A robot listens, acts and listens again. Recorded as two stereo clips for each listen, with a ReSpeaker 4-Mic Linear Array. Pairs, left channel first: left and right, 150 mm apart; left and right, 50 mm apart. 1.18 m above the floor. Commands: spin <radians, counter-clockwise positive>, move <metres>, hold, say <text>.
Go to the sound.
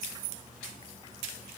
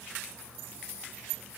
hold
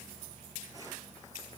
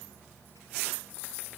hold
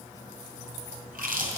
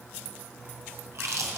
spin -1.31
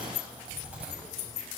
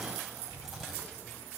spin -0.17
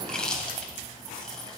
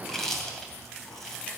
move 1.0
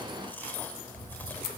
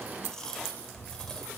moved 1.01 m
spin 0.26
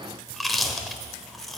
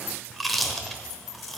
move 1.0
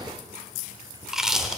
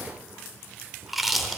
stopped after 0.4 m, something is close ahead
say Arrived at the chewing, straight ahead.